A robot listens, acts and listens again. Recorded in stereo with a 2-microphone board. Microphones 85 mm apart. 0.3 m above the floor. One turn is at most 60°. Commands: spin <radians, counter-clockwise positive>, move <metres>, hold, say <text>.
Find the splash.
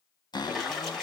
spin 0.52
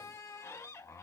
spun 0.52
hold
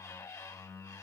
say I heard a splash, but can't make it out now. It was about 25° right or 145° left.